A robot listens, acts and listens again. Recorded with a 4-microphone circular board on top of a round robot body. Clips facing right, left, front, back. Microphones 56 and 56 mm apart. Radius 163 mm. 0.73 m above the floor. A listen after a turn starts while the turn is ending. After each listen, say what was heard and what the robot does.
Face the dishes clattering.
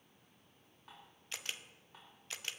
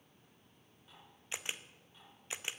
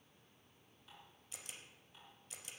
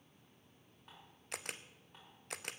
The dishes clattering: 130° right. Turn 130° right.
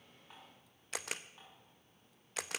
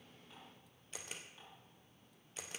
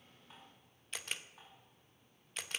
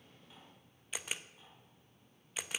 The dishes clattering is now 30° right. Turn 30° right.
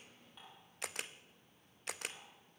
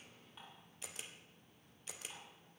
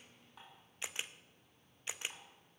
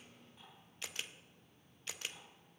Found it: dishes clattering, straight ahead.